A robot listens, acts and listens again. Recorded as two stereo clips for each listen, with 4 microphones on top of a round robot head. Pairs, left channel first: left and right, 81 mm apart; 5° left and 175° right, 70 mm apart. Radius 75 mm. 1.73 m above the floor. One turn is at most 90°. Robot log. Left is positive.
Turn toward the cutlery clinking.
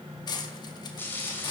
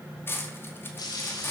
note: The cutlery clinking: 60° left.
cmd yaw +60
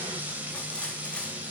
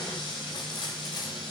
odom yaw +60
cmd idle
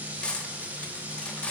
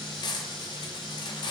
note: The cutlery clinking is now 10° left.
cmd yaw +10
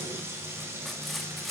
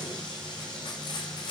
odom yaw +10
end: Facing the cutlery clinking.